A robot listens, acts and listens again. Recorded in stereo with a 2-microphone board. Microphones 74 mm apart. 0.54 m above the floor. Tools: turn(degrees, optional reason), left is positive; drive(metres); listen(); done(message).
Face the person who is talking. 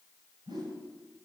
listen()
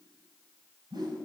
listen()
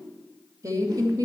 turn(degrees=-50, reason="The woman speaking: about 50° right or 130° right.")
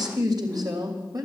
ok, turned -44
turn(degrees=-55, reason="So it is at 55° right.")
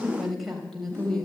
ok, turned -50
done("Found it: a woman speaking, straight ahead.")